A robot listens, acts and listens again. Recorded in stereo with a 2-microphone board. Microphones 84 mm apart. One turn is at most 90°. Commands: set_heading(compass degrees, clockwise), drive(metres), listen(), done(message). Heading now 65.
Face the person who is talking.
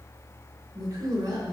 set_heading(120)
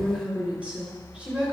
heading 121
set_heading(136)
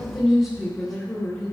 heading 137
done("Facing the woman speaking, 2 to 4 m away.")